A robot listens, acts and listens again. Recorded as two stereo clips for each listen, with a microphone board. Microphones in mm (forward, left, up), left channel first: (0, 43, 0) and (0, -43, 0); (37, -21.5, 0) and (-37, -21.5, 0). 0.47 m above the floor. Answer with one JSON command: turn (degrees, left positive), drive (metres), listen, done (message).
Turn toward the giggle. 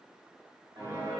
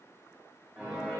{"listen": true}
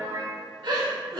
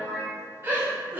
{"turn": -115}
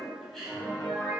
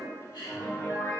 {"done": "Found it: a giggle, straight ahead."}